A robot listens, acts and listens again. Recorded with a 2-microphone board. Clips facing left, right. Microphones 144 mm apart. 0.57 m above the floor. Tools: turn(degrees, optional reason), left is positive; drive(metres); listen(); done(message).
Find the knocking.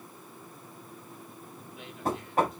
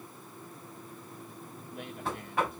turn(degrees=40, reason="The knocking: about 40° left or 140° left.")
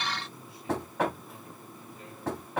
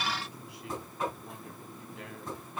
turn(degrees=100, reason="So it is at 100° left.")
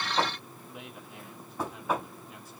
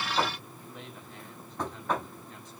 done("Facing the knocking, 2 to 4 m away.")